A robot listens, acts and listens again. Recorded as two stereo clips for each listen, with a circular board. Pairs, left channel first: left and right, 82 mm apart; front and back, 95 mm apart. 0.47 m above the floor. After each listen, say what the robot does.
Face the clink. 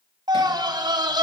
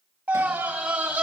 Keep listening.
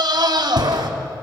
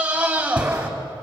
Keep listening.
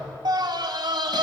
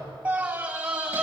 I can't make out a clink to turn to.